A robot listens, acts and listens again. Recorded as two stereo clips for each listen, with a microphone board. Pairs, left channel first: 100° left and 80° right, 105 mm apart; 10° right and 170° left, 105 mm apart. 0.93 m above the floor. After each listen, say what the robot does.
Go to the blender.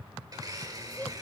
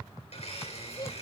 Turn 25° right.
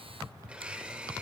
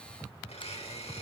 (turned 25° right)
Drive 1.0 m forward.
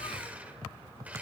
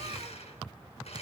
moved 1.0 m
Drive 1.0 m forward.
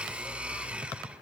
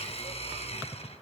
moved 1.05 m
Drive 1.0 m forward.
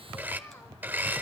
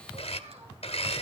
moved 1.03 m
Drive 1.0 m forward.
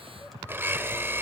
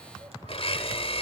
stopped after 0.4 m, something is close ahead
Turn 10° right.
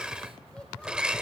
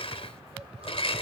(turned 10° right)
Arrived at the blender, straight ahead.